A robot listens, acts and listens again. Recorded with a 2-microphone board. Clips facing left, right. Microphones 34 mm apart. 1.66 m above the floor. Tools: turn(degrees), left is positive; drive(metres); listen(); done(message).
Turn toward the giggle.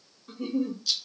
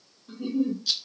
turn(degrees=70)
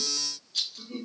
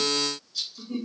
turn(degrees=10)
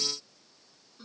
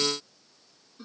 done("Facing the giggle.")